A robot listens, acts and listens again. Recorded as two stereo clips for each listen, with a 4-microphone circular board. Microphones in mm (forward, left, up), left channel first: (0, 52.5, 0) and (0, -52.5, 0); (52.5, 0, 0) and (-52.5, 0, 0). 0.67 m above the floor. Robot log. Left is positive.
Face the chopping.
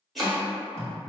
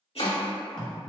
end: Found it: chopping, straight ahead.